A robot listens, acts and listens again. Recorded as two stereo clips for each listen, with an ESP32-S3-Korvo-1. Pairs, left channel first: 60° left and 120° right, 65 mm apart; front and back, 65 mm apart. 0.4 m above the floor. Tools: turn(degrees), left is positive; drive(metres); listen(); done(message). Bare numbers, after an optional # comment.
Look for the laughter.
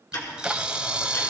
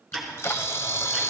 listen()
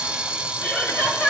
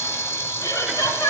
done("Found it: laughter, straight ahead, 2 to 4 m away.")